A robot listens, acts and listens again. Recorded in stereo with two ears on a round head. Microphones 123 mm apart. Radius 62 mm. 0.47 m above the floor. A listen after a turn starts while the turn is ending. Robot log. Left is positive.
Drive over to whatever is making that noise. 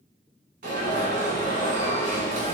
note: The alarm: about 70° right or 110° right.
cmd yaw -70
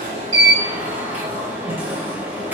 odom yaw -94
note: So it is at 15° right.
cmd yaw -15
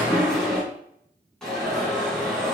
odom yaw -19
cmd fwd 1.0
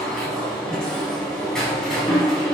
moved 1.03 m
cmd fwd 1.0
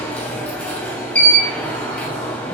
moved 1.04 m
note: The alarm is now 10° left.
cmd yaw +10
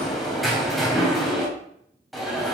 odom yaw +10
cmd fwd 1.0
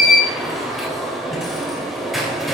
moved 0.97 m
cmd fwd 1.0
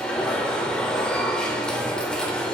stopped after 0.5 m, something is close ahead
note: The alarm is now 10° left.
cmd yaw +10
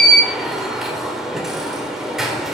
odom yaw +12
end: I am next to the alarm.